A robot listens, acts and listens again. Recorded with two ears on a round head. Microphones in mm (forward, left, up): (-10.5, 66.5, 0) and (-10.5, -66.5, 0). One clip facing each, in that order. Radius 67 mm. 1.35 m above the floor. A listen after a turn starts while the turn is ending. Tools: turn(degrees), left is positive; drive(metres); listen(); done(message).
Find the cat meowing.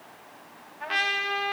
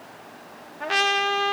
listen()
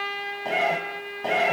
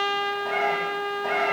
turn(degrees=30)
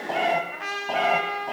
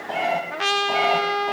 done("Facing the cat meowing.")